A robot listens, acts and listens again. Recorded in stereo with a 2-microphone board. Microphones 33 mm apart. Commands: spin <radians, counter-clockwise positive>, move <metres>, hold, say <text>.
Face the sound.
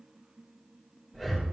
spin 0.52
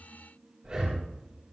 spin -0.35
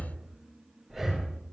say Found it: breathing, straight ahead, over 4 m away.